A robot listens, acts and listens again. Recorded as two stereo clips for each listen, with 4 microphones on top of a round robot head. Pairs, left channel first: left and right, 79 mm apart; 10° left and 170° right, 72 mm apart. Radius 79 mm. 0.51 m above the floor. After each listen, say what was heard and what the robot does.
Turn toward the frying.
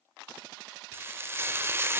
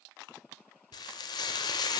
The frying: 30° right. Turn 30° right.
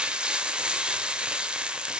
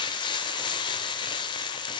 The frying is now 10° right. Turn 10° right.
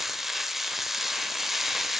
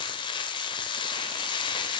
Facing the frying.